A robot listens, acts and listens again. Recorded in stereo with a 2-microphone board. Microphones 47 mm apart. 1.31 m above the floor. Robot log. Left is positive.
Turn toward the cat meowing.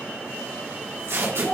cmd idle
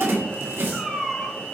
cmd yaw +30
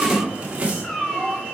cmd yaw +30
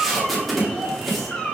cmd yaw +30
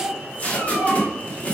cmd idle
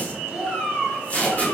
note: So it is at 150° left.
cmd yaw +150
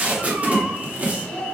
cmd idle
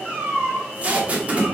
note: The cat meowing is now 30° right.
cmd yaw -30
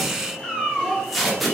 end: Found it: a cat meowing, straight ahead.